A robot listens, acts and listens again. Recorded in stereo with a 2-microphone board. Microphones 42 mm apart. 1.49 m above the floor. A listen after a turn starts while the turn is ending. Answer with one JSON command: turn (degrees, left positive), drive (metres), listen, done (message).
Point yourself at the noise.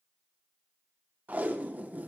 {"turn": -40}
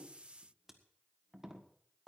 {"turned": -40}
{"turn": -10}
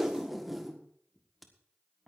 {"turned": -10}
{"done": "Found it: tape being pulled, straight ahead."}